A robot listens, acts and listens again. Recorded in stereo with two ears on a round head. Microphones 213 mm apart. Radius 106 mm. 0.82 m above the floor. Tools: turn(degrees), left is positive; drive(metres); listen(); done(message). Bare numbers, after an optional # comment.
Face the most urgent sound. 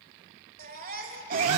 # The baby crying: about 40° right or 140° right.
turn(-40)
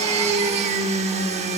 listen()
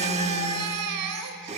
# So it is at 100° right.
turn(-100)
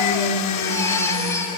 # The baby crying is now 10° left.
turn(10)
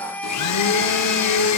done("Facing the baby crying.")